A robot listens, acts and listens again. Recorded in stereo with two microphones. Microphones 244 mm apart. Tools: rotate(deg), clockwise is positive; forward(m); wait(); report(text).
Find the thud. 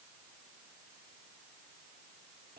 wait()
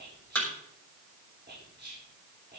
rotate(-30)
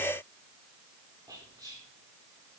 wait()
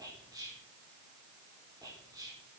report("I heard a thud, but can't make it out now. It was about 25° right or 145° left.")